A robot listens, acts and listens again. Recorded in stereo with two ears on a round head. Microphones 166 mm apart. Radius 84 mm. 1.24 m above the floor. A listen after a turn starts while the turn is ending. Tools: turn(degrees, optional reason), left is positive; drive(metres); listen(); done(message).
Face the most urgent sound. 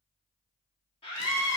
turn(degrees=30, reason="The scream: about 30° left or 150° left.")
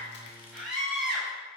done("Found it: a scream, straight ahead.")